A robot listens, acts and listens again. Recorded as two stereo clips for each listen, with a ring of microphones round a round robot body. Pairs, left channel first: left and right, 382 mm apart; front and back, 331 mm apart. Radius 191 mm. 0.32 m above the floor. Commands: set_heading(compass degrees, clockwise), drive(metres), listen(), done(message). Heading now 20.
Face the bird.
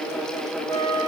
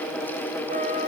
listen()
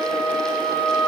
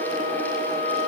listen()
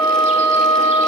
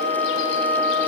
done("I can't make out a bird, only a flute.")